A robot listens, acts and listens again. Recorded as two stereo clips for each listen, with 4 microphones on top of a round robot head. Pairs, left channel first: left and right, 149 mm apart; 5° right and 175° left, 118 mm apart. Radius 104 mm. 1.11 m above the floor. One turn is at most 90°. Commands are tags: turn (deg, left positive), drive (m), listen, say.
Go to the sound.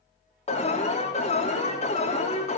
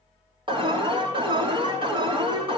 <turn deg="90"/>
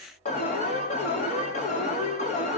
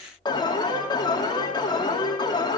<turn deg="45"/>
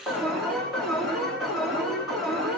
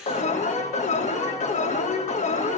<drive m="1.0"/>
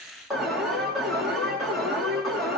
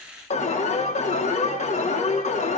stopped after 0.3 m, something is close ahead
<say>Blocked. The alarm is further on, straight ahead.</say>